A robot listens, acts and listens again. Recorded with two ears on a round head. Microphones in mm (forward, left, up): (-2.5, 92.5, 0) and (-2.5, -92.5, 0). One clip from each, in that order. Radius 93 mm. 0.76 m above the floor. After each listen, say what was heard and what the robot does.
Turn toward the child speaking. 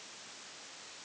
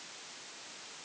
Keep listening.
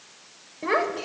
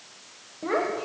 The child speaking: about 60° left or 120° left. Turn 60° left.
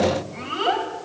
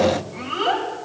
Found it: a child speaking, straight ahead, 2 to 4 m away.